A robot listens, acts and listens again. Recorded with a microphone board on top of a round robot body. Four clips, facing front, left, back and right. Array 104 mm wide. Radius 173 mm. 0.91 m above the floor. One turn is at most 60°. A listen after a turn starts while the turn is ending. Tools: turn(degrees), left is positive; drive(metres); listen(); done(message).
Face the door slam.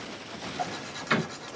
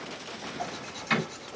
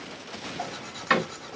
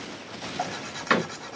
turn(degrees=-60)
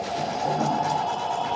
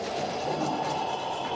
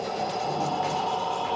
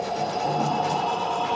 turn(degrees=-60)
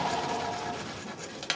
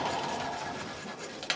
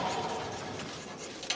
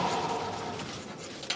done("Facing where the door slam came from. I can't hear it now.")